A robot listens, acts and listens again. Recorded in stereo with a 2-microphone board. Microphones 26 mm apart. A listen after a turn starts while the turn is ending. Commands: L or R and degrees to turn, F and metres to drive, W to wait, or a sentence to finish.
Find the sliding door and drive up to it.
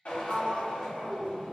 R40
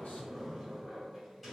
F1.0
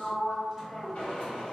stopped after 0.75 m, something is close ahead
Arrived at the sliding door, straight ahead.